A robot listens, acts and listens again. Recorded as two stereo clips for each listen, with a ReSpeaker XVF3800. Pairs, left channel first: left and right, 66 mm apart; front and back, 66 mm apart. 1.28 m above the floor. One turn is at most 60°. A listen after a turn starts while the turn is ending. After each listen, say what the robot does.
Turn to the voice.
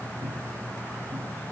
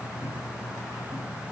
Keep listening.
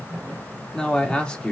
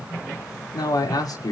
Turn 15° left.
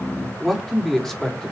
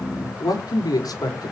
Found it: a man speaking, straight ahead, over 4 m away.